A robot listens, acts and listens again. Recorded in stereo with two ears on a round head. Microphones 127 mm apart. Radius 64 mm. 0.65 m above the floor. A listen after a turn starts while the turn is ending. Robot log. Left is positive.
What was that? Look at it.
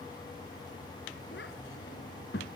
cmd yaw +90
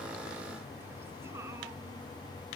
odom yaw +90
cmd idle
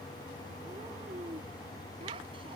note: The child speaking is now 40° right.
cmd yaw -40
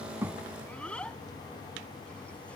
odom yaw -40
note: The child speaking is now 10° left.
cmd yaw +10
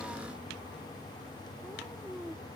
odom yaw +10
end: Found it: a child speaking, straight ahead.